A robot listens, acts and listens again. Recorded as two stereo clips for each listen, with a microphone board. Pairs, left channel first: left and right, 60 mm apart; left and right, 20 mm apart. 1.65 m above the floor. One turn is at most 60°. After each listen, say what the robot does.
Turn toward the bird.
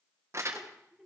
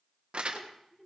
Keep listening.
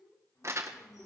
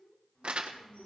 Turn 60° left.
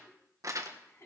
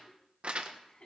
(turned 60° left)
Turn 30° left.
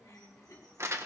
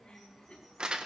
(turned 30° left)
Found it: a bird, straight ahead, over 4 m away.